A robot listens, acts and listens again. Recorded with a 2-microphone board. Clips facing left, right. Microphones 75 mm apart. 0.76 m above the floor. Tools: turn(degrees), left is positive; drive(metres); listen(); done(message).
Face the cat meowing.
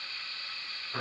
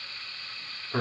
listen()
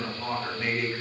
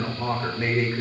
listen()
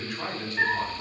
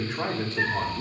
turn(degrees=40)
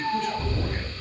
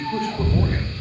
turn(degrees=20)
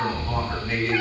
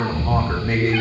turn(degrees=20)
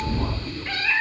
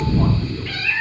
turn(degrees=25)
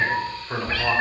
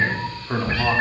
turn(degrees=-20)
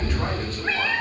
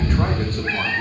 done("Facing the cat meowing.")